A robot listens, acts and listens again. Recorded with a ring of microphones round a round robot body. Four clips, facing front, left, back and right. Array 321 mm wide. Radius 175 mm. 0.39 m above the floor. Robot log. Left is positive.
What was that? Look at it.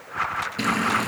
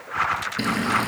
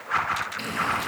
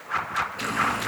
note: The frying: 50° left.
cmd yaw +50
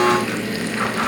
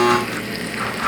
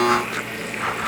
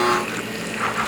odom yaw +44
end: Found it: frying, straight ahead.